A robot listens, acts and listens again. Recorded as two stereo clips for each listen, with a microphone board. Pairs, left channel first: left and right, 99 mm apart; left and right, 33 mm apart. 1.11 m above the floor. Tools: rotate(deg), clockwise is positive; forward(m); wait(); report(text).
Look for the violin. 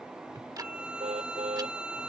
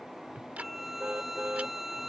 rotate(30)
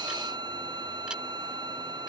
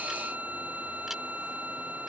rotate(135)
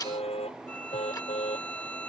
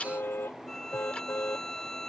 rotate(-15)
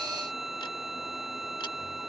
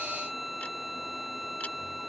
report("Facing the violin.")